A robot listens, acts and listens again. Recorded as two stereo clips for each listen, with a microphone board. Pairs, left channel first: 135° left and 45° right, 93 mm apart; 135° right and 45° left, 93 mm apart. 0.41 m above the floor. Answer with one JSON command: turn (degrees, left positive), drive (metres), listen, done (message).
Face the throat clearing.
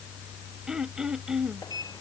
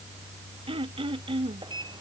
{"turn": 40}
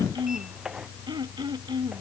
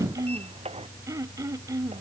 {"done": "Facing the throat clearing."}